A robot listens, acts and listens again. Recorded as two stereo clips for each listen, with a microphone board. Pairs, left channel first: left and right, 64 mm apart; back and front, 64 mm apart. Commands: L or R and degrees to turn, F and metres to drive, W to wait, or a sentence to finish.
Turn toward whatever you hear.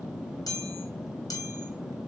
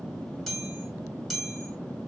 L90
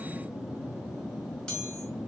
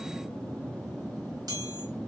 L10
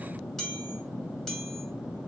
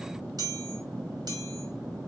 Found it: a chime, straight ahead.